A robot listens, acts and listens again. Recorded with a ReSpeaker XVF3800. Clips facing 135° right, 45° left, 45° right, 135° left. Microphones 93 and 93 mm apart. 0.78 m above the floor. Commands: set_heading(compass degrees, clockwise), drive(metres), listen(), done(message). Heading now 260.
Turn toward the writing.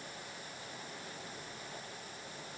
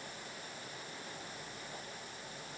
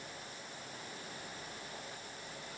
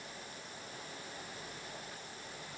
listen()
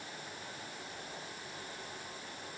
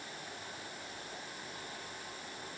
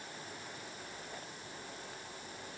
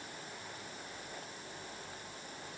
listen()
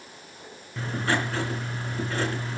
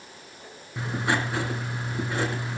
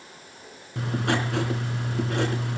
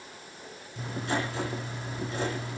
set_heading(290)
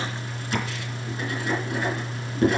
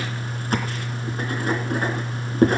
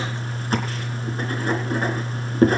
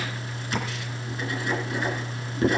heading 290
done("Facing the writing, 2 to 4 m away.")